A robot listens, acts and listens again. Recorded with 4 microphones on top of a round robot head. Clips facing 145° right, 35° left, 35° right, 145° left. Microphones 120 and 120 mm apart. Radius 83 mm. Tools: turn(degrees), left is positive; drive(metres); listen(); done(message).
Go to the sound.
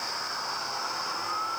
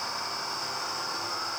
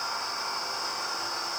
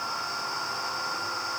listen()
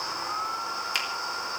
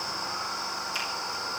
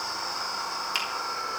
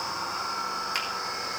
turn(degrees=-115)
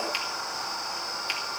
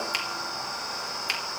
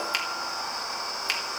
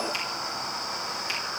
drive(metres=1.0)
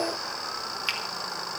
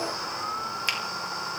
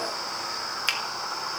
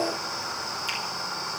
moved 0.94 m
turn(degrees=-10)
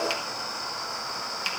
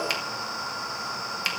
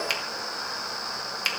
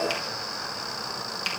drive(metres=1.0)
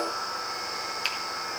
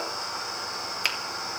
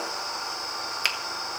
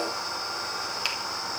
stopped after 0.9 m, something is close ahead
done("I am next to the finger snap.")